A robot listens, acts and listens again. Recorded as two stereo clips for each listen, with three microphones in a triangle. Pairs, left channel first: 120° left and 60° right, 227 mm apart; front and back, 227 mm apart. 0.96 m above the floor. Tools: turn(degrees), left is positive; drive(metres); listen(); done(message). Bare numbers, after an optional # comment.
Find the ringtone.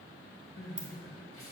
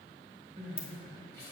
# The ringtone: 50° left.
turn(50)
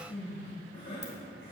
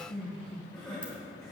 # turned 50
listen()
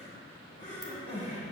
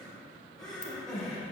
listen()
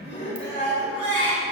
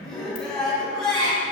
done("I heard a ringtone from this way, but can't make it out now.")